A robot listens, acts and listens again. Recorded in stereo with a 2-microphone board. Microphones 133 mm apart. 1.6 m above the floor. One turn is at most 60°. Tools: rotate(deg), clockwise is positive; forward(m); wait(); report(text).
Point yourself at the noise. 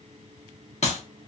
rotate(-60)
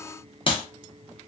rotate(-50)
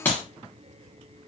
rotate(-15)
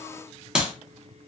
report("Found it: a clap, straight ahead, 1 to 2 m away.")